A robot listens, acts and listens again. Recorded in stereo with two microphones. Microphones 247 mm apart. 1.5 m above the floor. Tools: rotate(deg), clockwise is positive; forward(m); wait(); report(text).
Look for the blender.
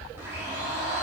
rotate(30)
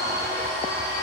rotate(140)
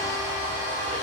rotate(-45)
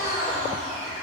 rotate(-35)
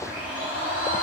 report("Facing the blender, 2 to 4 m away.")